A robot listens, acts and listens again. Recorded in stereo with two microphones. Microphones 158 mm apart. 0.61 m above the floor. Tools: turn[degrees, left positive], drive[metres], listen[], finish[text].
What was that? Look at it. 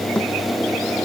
Action: turn[30]
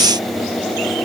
Action: listen[]
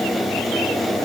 Action: finish[I heard a thud, but can't make it out now. It was about 25° right or 145° left.]